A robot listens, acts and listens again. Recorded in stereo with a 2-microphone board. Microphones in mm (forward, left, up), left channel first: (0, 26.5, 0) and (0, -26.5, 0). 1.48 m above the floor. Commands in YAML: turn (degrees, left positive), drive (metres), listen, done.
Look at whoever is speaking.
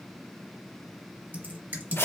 listen: true
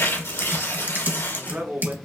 turn: -30
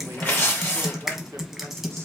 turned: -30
turn: -120
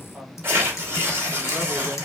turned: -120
listen: true
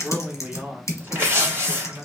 turn: -30
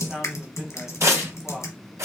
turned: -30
done: "Facing the man speaking."